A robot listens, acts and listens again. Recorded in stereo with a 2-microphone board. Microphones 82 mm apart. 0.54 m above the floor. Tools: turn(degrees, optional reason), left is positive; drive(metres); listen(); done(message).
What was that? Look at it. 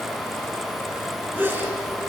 turn(degrees=-20, reason="The sneeze: about 20° right or 160° right.")
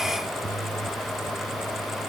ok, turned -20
listen()
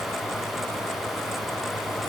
done("I heard a sneeze, but can't make it out now. It was about straight ahead or 140° right.")